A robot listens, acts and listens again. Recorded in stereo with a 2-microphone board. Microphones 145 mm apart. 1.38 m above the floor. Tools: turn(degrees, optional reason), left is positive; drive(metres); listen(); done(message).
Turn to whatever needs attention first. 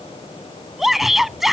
turn(degrees=30)
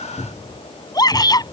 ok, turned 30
turn(degrees=155, reason="So it is at 155° left.")
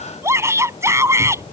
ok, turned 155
turn(degrees=-20, reason="The shout is now 20° right.")
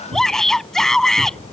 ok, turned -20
done("Facing the shout.")